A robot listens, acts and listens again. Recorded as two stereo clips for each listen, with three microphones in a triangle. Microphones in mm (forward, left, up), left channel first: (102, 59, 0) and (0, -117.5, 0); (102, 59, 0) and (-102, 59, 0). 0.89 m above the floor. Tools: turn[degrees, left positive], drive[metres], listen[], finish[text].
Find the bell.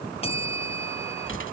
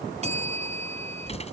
Thought: The bell: 120° left.
Action: turn[120]
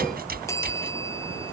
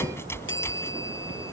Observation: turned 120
Thought: The bell is now 15° right.
Action: turn[-15]
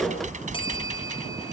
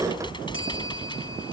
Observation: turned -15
Action: finish[Found it: a bell, straight ahead.]